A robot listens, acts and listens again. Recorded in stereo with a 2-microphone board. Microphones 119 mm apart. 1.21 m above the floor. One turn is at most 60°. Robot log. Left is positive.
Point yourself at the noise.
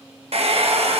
note: The hair dryer: about 60° right or 120° right.
cmd yaw -60
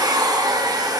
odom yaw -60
note: So it is at 40° right.
cmd yaw -40
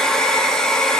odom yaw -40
end: Found it: a hair dryer, straight ahead, under 1 m away.